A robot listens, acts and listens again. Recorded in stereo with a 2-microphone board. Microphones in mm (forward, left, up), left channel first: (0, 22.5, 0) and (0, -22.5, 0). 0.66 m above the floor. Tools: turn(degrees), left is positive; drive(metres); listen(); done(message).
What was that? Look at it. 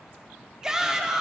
turn(degrees=-30)
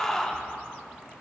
turn(degrees=15)
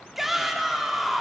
done("Found it: a shout, straight ahead.")